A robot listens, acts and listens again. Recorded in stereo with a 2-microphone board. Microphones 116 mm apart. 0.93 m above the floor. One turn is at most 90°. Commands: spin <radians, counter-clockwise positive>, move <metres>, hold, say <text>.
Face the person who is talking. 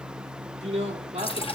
spin -1.13
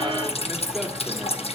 hold
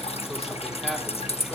hold
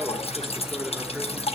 say I heard a man speaking, but can't make it out now. It was about straight ahead or 50° right.